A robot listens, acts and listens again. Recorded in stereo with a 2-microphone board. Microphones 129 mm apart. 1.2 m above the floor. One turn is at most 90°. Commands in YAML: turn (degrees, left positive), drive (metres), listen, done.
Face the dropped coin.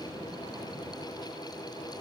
listen: true
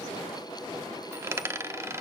turn: -20
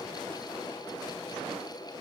listen: true
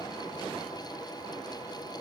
done: "I heard a dropped coin, but can't make it out now. It was about straight ahead or 140° right."